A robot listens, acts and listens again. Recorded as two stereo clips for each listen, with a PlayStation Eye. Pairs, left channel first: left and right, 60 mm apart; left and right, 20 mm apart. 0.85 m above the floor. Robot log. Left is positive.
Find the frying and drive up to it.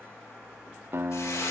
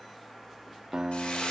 note: The frying: about 70° left or 110° left.
cmd yaw +70
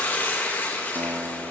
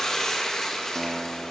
note: So it is at 35° left.
cmd yaw +35
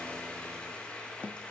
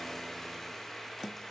note: The frying is now 20° left.
cmd yaw +20
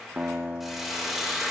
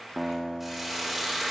cmd fwd 1.0
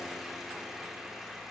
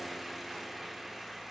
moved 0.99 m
cmd idle
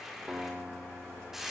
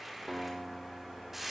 note: The frying is now 10° right.
cmd yaw -10
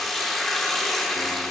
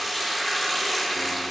cmd fwd 1.0
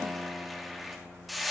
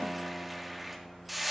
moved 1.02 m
cmd fwd 1.0
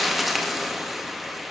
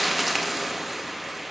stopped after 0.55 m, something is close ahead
end: Arrived at the frying, straight ahead.